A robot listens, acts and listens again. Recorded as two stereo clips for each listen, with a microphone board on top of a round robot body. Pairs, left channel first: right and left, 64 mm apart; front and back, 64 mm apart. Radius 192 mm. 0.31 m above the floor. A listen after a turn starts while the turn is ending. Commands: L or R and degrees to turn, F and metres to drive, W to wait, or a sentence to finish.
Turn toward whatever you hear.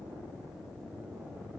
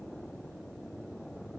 W
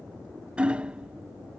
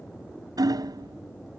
L165
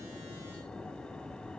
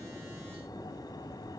W
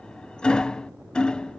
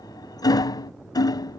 R10
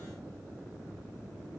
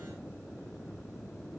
W
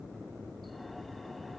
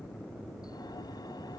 W
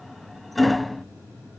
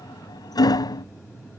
Facing the hammering.